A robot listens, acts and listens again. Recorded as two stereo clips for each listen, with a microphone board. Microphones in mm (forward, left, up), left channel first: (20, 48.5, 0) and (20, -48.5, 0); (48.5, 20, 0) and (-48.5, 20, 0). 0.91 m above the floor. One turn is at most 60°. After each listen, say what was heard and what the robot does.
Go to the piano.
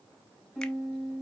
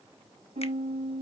The piano: 175° right. Turn 60° right.
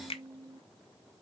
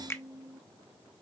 The piano is now 120° right. Turn 60° right.
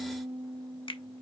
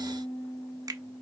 The piano is now 60° right. Turn 60° right.
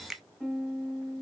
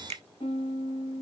Drive 1.0 m forward.
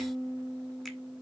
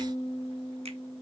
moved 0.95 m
The piano is now 10° right. Turn 10° right.
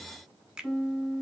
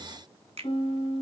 Drive 1.0 m forward.
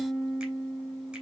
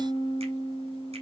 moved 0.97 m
Drive 1.0 m forward.
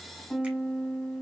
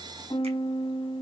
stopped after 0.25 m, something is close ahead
Arrived at the piano, straight ahead.